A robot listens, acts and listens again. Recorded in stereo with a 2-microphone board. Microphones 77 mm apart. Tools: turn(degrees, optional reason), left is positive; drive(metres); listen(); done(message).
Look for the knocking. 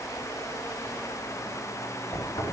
turn(degrees=65, reason="The knocking: about 65° left or 115° left.")
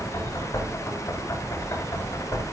turn(degrees=45, reason="So it is at 45° left.")
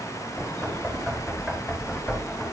done("Found it: knocking, straight ahead.")